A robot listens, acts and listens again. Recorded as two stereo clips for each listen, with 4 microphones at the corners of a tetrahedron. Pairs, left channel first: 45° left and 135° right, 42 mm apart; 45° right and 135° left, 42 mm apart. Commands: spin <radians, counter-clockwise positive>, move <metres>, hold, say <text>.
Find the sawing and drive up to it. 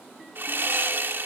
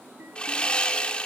spin -1.83
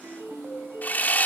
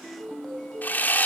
move 1.0
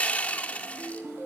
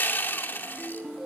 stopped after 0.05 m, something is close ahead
spin -0.17
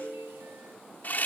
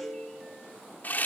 say Something is in my way. I am facing the sawing but have not reached it.